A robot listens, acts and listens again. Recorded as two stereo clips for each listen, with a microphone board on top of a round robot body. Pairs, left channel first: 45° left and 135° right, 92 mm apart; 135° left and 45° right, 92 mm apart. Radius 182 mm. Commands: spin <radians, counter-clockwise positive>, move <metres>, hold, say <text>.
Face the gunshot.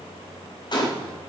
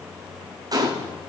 say Found it: a gunshot, straight ahead, 1 to 2 m away.